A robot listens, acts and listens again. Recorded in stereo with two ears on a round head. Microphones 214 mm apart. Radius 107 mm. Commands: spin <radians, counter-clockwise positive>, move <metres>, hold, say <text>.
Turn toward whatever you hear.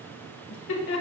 spin 0.96
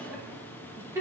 spin -0.26
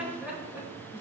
spin -0.17
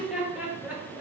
say Facing the laughter, 2 to 4 m away.